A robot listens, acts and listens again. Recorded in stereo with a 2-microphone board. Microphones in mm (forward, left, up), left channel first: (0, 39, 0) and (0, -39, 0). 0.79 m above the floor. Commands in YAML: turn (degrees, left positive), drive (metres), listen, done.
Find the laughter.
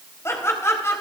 turn: 35
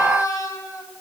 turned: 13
turn: 45
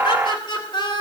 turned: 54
turn: 75
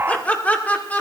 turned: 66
turn: 20
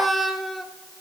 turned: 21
done: "Facing the laughter."